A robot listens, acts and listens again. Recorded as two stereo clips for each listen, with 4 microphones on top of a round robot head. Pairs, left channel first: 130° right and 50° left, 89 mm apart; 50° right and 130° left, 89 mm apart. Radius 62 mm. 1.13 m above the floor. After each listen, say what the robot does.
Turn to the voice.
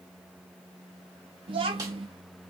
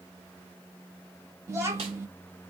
Turn 70° left.
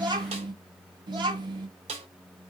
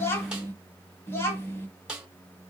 Turn 15° left.
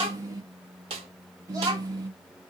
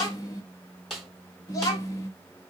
Facing the child speaking.